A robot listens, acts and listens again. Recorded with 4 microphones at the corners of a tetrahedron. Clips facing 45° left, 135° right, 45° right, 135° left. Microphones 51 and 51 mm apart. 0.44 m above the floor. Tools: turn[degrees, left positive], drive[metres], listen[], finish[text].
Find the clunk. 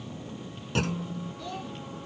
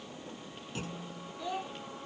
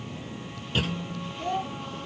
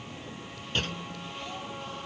Thought: The clunk: 40° left.
Action: turn[40]
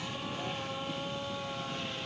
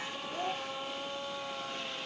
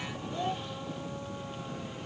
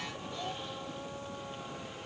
Action: finish[Facing where the clunk came from. I can't hear it now.]